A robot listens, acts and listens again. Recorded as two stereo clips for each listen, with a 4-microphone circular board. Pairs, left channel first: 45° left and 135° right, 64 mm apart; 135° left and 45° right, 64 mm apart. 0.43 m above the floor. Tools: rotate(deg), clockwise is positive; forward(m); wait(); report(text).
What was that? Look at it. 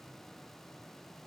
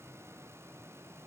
wait()
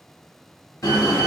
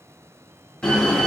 rotate(-65)
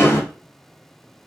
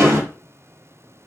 report("Facing the door slam, 1 to 2 m away.")